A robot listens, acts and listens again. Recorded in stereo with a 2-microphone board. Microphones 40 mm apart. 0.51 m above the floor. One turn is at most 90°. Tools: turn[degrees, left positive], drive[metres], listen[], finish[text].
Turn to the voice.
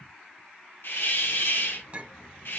Thought: The child speaking: about 60° left or 120° left.
Action: turn[60]
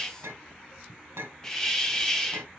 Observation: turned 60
Thought: So it is at 55° left.
Action: turn[55]
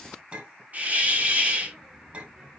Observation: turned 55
Action: finish[Facing the child speaking, over 4 m away.]